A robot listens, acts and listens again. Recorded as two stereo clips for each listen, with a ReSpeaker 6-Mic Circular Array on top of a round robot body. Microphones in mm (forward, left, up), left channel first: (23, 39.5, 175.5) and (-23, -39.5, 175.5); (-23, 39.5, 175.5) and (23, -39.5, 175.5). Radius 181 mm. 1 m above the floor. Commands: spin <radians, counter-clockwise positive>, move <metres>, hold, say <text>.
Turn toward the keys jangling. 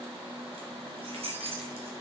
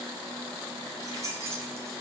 spin -2.09
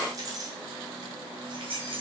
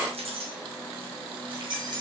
spin -1.75
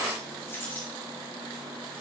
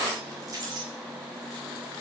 spin -0.17
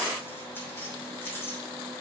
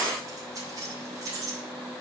say Found it: keys jangling, straight ahead, 2 to 4 m away.